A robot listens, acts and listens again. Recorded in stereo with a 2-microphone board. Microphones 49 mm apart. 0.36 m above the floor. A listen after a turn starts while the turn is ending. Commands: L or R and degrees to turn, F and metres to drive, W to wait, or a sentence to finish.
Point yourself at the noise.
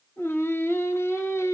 L70
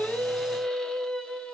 L25
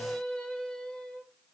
L25
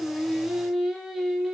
Facing the singing.